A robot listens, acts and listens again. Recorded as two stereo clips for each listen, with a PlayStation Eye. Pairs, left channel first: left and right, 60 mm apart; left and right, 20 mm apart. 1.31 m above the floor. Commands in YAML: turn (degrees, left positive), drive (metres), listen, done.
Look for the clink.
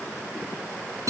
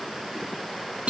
listen: true
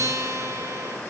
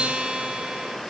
listen: true
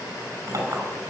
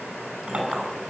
turn: -65
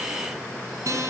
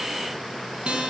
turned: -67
listen: true
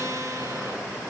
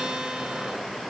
listen: true
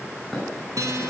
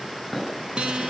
done: "I heard a clink, but can't make it out now. It was about straight ahead or 45° right."